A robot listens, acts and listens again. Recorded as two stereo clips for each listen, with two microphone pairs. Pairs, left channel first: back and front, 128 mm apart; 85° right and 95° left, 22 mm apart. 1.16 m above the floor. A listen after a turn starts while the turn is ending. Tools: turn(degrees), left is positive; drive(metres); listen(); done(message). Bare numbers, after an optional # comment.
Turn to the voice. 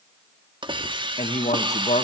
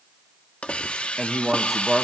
# The man speaking: 170° left.
turn(170)
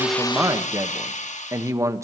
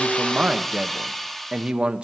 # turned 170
# The man speaking is now 65° left.
turn(65)
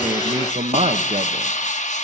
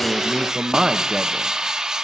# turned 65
# The man speaking is now 25° left.
turn(25)
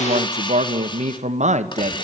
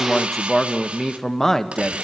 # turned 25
# The man speaking is now 10° right.
turn(-10)
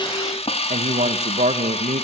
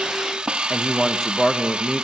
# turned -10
done("Found it: a man speaking, straight ahead.")